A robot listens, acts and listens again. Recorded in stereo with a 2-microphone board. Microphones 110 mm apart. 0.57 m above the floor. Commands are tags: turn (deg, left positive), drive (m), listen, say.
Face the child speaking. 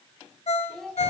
<turn deg="30"/>
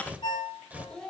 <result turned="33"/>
<turn deg="30"/>
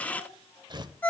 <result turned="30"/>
<listen/>
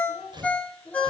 <turn deg="30"/>
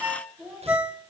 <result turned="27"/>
<turn deg="-30"/>
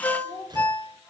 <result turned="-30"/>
<turn deg="25"/>
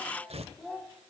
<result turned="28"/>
<say>Found it: a child speaking, straight ahead.</say>